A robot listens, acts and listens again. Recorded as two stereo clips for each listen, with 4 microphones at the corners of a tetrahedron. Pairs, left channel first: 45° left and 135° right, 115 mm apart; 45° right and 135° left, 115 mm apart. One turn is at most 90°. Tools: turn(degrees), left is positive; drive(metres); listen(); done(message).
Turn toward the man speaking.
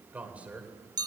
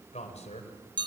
turn(degrees=-55)
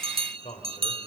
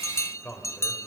turn(degrees=30)
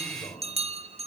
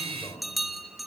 turn(degrees=10)
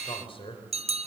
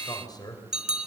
turn(degrees=10)
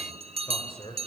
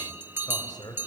turn(degrees=10)
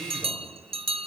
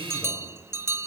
listen()
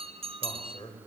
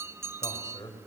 done("Found it: a man speaking, straight ahead, over 4 m away.")